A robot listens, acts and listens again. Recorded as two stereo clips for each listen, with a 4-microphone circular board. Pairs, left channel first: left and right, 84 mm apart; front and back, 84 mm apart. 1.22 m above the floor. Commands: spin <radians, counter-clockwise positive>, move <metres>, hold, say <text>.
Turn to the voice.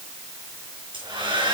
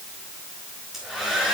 hold
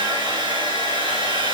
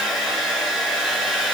hold
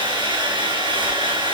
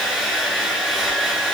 say I can't make out anyone speaking to turn to.